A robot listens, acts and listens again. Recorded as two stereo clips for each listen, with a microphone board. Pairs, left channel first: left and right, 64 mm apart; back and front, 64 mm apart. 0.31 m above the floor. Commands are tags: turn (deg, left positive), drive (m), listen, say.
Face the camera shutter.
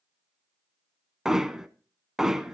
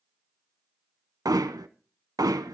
<listen/>
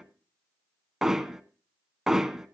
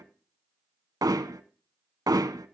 <listen/>
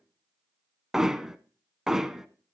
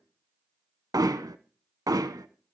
<say>I can't make out a camera shutter to turn to.</say>